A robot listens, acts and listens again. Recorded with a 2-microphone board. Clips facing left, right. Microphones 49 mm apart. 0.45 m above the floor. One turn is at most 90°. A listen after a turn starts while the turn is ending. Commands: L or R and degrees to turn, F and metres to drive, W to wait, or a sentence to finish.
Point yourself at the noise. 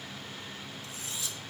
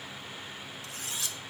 R65
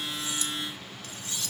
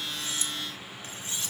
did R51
R30
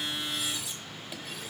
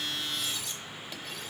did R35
Facing the cutlery clinking, under 1 m away.